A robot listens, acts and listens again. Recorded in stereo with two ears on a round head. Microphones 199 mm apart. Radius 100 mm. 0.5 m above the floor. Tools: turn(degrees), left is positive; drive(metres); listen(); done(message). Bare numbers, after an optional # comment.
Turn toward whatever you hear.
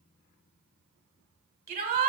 # The shout: about 40° right or 140° right.
turn(-40)
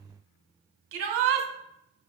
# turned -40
# So it is at 90° right.
turn(-90)
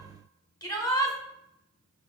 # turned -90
# The shout is now 20° left.
turn(20)
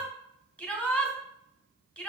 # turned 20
done("Facing the shout.")